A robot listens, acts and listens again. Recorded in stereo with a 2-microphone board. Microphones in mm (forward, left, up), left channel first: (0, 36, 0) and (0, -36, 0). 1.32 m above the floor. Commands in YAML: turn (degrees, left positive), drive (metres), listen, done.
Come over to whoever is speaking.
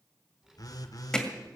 turn: -30
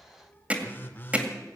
turn: 25
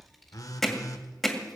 drive: 1.0
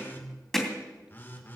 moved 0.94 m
listen: true
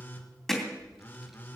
drive: 1.0
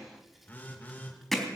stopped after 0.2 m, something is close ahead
done: "Something is in my way. I am facing the child speaking but have not reached it."